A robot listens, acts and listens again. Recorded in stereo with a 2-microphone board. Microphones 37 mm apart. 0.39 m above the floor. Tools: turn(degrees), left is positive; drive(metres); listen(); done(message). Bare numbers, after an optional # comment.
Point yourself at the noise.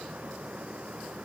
listen()
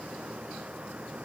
listen()
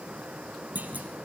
# The clunk: about 50° right or 130° right.
turn(-50)
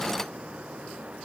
listen()
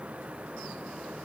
done("I heard a clunk, but can't make it out now. It was about straight ahead or 80° right.")